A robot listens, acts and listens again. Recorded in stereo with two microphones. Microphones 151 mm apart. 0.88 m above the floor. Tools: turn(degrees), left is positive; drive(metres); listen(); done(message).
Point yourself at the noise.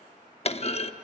turn(degrees=45)
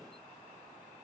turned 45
listen()
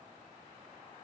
done("I heard a clunk, but can't make it out now. It was about straight ahead or 90° left.")